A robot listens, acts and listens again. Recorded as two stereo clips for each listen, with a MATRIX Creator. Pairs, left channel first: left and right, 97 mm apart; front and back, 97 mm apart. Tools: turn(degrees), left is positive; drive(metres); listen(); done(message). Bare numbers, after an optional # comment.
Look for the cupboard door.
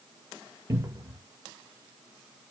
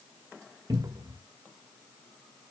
# The cupboard door: 140° right.
turn(-140)
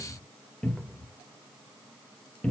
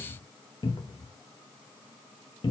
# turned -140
# The cupboard door is now 15° left.
turn(15)
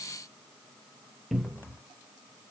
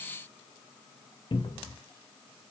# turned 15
done("Facing the cupboard door.")